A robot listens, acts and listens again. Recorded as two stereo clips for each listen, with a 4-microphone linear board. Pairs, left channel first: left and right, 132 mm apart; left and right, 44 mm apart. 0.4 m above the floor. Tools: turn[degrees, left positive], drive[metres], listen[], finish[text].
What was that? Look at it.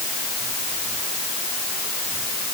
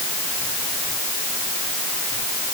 Action: listen[]
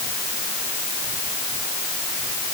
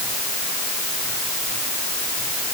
Action: listen[]
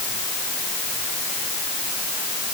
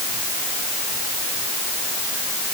Action: finish[I can't make out anything.]